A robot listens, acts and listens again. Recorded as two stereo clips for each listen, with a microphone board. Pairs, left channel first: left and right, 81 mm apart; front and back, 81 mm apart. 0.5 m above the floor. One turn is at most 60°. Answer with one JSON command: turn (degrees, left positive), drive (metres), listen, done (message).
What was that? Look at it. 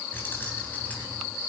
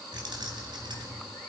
{"turn": 60}
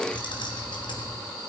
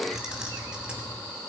{"turn": 60}
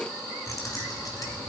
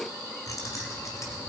{"turn": 50}
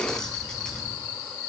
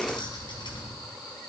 {"turn": 10}
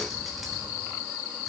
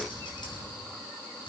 {"listen": true}
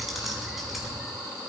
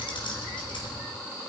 {"done": "Facing the keys jangling, 2 to 4 m away."}